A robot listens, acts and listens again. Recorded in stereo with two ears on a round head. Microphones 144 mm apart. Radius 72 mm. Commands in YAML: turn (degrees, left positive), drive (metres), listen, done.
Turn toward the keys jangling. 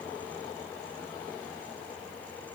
listen: true
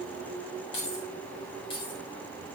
turn: 35
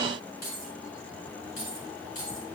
turn: 125
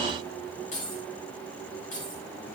turn: 50
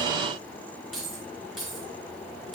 done: "Facing the keys jangling, over 4 m away."